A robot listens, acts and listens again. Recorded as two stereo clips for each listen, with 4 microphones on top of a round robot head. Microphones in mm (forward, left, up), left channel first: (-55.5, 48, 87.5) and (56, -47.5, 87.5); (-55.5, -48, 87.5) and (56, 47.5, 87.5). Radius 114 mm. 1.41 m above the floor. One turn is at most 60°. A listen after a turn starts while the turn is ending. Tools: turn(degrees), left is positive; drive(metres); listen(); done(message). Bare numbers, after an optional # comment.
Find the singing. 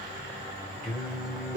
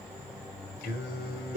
# The singing: 125° right.
turn(-60)
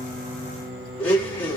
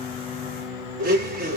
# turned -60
# The singing is now 25° right.
turn(-25)
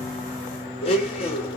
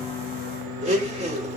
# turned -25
# The singing is now 30° left.
turn(30)
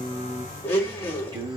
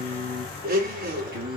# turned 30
# The singing is now 20° left.
turn(20)
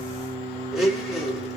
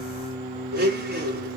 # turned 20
done("Facing the singing.")